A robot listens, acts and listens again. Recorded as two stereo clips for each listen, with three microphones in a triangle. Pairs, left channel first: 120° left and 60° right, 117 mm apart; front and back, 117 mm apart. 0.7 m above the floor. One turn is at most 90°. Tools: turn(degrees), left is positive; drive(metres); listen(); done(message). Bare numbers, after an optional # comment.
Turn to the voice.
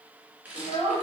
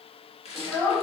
# The child speaking: 70° right.
turn(-70)
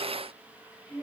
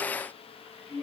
# The child speaking is now 25° left.
turn(25)
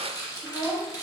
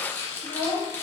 # The child speaking is now 15° right.
turn(-15)
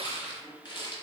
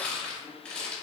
listen()
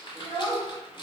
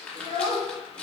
done("Found it: a child speaking, straight ahead.")